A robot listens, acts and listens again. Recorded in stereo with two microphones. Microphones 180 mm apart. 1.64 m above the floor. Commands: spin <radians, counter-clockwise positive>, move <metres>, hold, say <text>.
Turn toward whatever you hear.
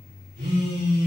spin -1.13
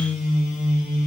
say Facing the phone buzzing, 2 to 4 m away.